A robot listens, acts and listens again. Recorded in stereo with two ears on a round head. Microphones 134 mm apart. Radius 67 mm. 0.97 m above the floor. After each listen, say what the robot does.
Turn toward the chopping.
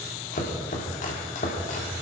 Turn 55° left.
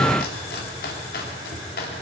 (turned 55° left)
Turn 70° left.
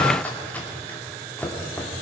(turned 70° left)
Turn 10° left.
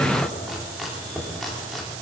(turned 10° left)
Facing the chopping, 2 to 4 m away.